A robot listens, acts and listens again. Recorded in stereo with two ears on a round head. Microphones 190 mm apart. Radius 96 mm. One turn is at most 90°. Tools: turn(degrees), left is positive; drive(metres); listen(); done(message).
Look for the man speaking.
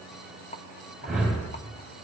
listen()
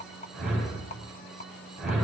listen()
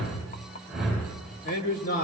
turn(degrees=50)
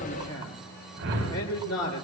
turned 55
turn(degrees=75)
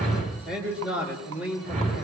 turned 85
done("Found it: a man speaking, straight ahead, 2 to 4 m away.")